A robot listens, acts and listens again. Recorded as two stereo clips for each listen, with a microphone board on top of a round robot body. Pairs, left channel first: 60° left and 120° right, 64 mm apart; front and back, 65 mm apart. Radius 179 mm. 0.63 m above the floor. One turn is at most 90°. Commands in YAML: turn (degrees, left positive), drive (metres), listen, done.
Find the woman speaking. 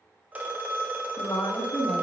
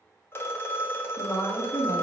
turn: 20
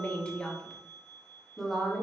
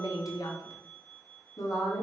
turn: -35
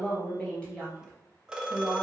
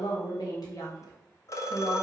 turn: -25
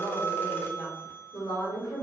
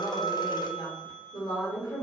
turn: 15
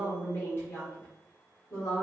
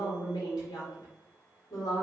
done: "Facing the woman speaking, 2 to 4 m away."